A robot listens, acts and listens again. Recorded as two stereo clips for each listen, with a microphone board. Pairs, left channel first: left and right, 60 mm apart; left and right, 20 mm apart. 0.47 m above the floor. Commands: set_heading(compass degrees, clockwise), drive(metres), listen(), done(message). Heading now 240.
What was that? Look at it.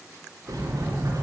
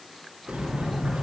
set_heading(315)
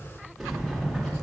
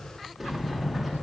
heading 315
done("Facing the sliding door, 2 to 4 m away.")